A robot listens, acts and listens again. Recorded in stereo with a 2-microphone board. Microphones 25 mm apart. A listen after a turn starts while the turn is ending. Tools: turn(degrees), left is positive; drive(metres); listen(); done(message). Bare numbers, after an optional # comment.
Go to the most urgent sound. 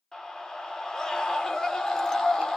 # The scream: about 25° left or 155° left.
turn(25)
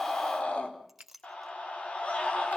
# So it is at 130° left.
turn(130)
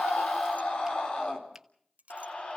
# The scream is now 45° left.
turn(45)
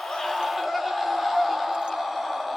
drive(1.0)
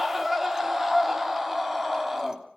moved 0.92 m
# The scream is now 10° right.
turn(-10)
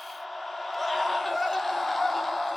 drive(1.0)
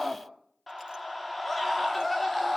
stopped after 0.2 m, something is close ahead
done("Blocked. The scream is further on, straight ahead.")